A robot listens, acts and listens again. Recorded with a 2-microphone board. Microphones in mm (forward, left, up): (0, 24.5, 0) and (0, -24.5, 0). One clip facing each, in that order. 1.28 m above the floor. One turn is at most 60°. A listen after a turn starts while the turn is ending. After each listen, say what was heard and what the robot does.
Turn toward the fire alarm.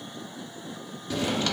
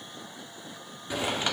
Keep listening.
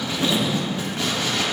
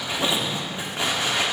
Keep listening.
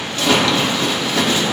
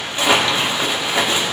I can't make out a fire alarm, only a zipper.